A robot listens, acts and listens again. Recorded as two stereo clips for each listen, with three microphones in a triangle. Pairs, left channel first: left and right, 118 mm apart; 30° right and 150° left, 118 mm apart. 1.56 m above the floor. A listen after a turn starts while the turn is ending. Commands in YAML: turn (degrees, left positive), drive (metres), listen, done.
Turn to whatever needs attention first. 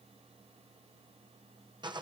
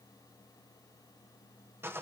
listen: true
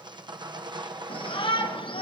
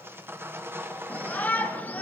turn: 45
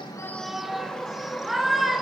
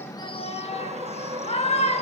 done: "Facing the shout, 1 to 2 m away."